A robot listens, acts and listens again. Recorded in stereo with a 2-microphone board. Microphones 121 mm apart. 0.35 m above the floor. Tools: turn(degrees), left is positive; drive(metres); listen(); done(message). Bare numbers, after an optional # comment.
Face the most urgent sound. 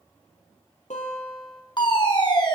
# The fire alarm: about 40° left or 140° left.
turn(40)
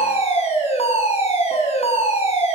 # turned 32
# So it is at 105° left.
turn(105)
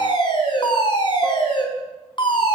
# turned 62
# The fire alarm is now 45° left.
turn(45)
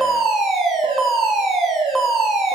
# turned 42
done("Found it: a fire alarm, straight ahead.")